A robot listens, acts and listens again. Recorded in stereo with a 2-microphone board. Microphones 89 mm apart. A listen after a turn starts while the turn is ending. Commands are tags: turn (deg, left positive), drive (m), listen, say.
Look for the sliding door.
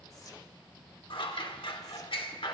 <listen/>
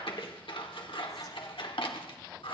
<listen/>
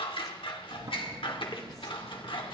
<turn deg="-50"/>
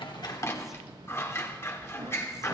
<turn deg="-80"/>
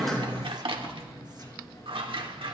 <turn deg="40"/>
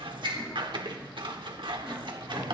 <turn deg="20"/>
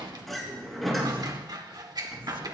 <say>Found it: a sliding door, straight ahead, over 4 m away.</say>